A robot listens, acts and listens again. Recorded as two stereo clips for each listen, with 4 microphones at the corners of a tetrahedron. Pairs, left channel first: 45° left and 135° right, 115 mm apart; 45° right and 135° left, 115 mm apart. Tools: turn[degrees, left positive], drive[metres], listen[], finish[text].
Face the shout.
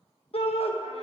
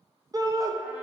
Thought: The shout: 75° left.
Action: turn[75]
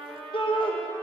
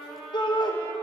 Action: finish[Facing the shout.]